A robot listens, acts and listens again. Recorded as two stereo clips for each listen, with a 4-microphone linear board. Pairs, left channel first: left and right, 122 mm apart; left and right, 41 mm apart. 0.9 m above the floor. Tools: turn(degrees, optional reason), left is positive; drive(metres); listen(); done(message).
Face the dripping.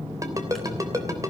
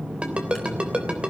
listen()
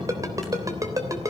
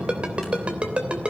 listen()
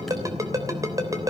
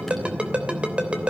done("I can't make out dripping to turn to.")